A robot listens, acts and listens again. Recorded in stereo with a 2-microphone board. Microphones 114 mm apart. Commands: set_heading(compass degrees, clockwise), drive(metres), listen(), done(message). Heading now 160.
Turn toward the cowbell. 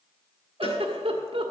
set_heading(110)
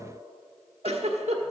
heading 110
listen()
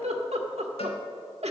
listen()
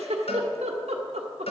set_heading(40)
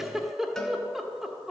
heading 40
done("Found it: a cowbell, straight ahead.")